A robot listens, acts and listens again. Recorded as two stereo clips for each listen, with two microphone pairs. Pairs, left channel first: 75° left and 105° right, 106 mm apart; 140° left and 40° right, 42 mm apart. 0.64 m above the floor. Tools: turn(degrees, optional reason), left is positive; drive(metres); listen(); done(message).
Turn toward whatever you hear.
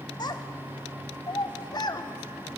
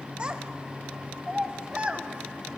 turn(degrees=25, reason="The child speaking: 25° left.")
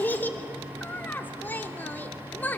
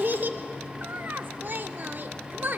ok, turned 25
done("Facing the child speaking, under 1 m away.")